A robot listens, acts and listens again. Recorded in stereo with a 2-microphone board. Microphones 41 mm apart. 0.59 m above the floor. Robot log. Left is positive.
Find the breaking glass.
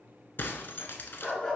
note: The breaking glass: about 55° left or 125° left.
cmd yaw +55
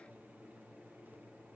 cmd idle
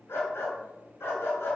end: I heard breaking glass, but can't make it out now. It was about straight ahead or 70° left.